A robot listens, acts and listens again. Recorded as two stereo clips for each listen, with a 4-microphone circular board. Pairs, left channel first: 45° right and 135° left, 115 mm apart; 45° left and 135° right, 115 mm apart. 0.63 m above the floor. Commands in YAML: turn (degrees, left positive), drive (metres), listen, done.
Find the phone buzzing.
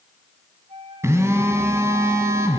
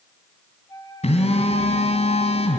turn: 70
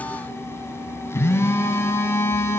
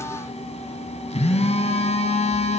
turn: 25
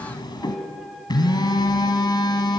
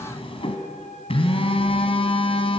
turn: 10
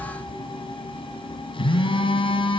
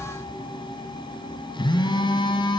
done: "Facing the phone buzzing."